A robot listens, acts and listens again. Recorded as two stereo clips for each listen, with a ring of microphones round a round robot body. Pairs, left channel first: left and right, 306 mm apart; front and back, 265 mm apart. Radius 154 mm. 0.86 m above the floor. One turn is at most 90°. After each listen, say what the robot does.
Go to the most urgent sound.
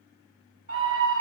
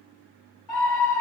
Turn 30° right.
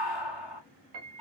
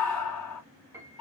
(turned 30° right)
Drive 1.0 m forward.
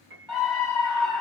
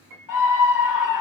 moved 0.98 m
Turn 10° right.
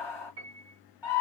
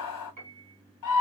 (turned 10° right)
Drive 1.0 m forward.
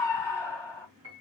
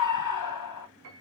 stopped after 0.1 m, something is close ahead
Arrived at the scream, straight ahead.